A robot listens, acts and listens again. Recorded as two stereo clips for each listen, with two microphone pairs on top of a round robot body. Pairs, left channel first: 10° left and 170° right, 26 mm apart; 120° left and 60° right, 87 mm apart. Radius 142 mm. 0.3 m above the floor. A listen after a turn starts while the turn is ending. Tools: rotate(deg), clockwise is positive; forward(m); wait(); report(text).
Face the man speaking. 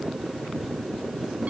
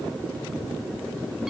wait()
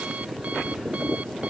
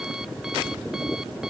wait()
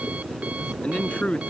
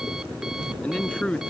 rotate(-40)
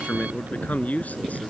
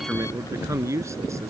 report("Facing the man speaking.")